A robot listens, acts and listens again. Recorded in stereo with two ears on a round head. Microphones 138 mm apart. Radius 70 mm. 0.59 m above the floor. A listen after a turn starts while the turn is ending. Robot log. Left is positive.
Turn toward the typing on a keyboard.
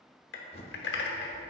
note: The typing on a keyboard: about 70° left or 110° left.
cmd yaw +70
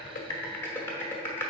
note: So it is at 15° left.
cmd yaw +15
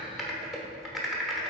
end: Found it: typing on a keyboard, straight ahead, under 1 m away.